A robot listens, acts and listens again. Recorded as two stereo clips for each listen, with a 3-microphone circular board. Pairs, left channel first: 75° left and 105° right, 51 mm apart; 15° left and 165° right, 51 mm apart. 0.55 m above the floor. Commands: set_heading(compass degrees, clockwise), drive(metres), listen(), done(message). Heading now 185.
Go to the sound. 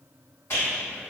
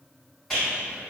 set_heading(90)
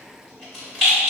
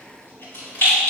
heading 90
drive(1.0)
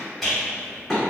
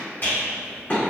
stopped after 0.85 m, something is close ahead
set_heading(105)
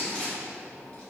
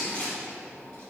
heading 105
listen()
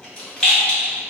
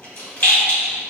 done("Arrived at the rattle, straight ahead.")